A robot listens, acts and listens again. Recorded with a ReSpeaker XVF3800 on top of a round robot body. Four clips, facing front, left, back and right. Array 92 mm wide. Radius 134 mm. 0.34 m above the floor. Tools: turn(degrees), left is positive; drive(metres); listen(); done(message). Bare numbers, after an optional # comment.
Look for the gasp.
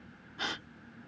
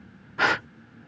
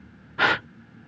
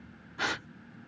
# The gasp: 145° left.
turn(145)
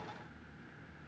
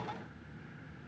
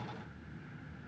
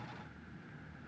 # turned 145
done("Facing where the gasp came from. I can't hear it now.")